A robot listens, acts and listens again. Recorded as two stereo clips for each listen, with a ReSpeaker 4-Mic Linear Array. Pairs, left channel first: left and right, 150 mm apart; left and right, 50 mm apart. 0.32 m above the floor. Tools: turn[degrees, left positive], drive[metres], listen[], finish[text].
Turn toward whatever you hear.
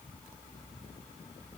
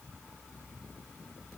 Action: listen[]
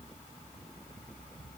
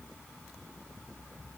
Action: listen[]
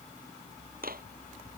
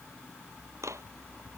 Action: turn[-90]
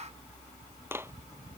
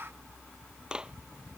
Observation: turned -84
Thought: So it is at 15° right.
Action: turn[-15]
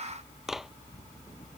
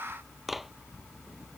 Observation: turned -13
Action: finish[Found it: a clap, straight ahead.]